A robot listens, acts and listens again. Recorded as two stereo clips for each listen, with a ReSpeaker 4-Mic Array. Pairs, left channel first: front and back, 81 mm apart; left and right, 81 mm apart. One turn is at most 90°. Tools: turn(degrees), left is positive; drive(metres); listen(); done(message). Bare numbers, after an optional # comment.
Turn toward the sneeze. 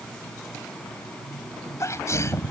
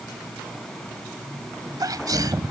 # The sneeze: 50° right.
turn(-50)
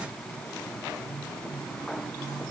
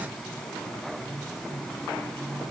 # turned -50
done("Facing where the sneeze came from. I can't hear it now.")